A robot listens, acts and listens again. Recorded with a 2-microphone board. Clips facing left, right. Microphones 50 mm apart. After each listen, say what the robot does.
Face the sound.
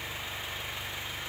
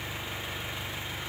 Keep listening.
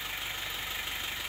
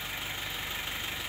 Keep listening.
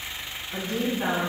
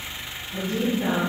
Turn 45° left.
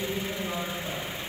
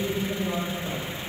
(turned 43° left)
Found it: a woman speaking, straight ahead.